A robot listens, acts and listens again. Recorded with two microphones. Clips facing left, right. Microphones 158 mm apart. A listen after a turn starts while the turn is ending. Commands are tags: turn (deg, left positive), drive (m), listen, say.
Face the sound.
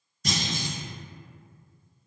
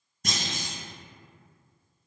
<turn deg="-60"/>
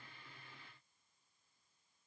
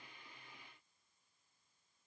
<listen/>
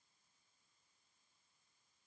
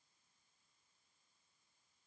<say>I heard a clunk, but can't make it out now. It was about straight ahead or 60° right.</say>